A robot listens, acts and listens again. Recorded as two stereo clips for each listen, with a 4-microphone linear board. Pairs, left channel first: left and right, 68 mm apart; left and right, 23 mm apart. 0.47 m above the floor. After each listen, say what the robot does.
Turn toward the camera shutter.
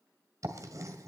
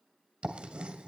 Keep listening.
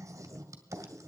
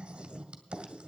Keep listening.
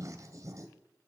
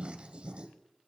I can't make out a camera shutter, only writing.